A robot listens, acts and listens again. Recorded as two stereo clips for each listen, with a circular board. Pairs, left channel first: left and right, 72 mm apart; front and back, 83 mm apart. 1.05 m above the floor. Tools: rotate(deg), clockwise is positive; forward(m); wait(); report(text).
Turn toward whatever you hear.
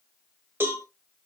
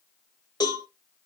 rotate(35)
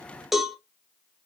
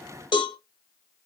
report("Facing the cowbell, 1 to 2 m away.")